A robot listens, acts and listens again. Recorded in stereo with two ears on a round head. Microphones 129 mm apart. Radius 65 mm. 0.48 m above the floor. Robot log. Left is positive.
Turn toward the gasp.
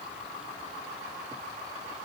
cmd idle
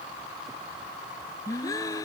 note: The gasp: about 25° left or 155° left.
cmd yaw +25
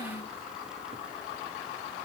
note: So it is at 130° left.
cmd yaw +130
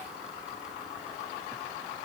end: Facing where the gasp came from. I can't hear it now.